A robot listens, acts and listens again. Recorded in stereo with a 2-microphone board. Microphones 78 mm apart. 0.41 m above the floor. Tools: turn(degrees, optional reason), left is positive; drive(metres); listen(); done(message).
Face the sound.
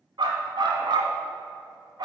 turn(degrees=-90)
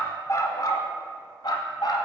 turn(degrees=70, reason="So it is at 70° left.")
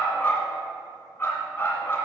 turn(degrees=30, reason="The dog barking is now 30° left.")
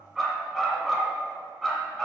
done("Facing the dog barking, 2 to 4 m away.")